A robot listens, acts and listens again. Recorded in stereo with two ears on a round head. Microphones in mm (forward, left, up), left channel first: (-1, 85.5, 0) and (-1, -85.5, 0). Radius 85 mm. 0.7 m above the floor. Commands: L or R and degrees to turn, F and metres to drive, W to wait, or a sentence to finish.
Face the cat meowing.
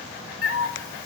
L70
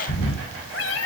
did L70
L70
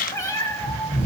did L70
L20
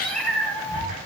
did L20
Facing the cat meowing, 2 to 4 m away.